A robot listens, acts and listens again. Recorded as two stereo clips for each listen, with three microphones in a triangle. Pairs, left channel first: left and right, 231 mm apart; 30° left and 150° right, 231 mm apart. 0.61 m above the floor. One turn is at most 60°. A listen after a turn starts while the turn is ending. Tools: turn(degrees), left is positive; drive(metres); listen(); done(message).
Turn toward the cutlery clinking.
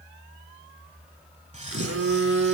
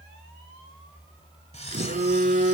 turn(degrees=-30)
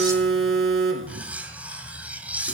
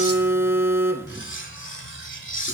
done("Facing the cutlery clinking, 1 to 2 m away.")